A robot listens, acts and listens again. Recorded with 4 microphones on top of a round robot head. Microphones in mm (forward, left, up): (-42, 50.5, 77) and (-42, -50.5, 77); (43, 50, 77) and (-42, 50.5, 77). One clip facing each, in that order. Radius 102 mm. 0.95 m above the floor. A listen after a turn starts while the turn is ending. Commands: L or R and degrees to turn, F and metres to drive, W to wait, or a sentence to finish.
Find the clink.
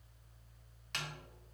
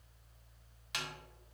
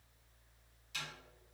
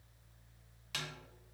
W
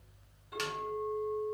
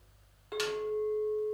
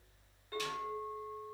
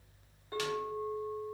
R105
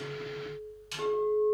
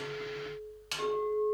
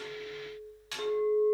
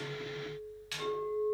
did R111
Facing the clink, 1 to 2 m away.